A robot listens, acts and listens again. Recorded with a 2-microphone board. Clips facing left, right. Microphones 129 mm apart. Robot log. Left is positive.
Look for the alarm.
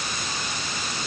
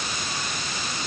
cmd idle
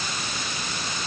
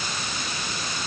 cmd idle
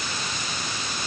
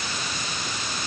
end: I can't make out an alarm to turn to.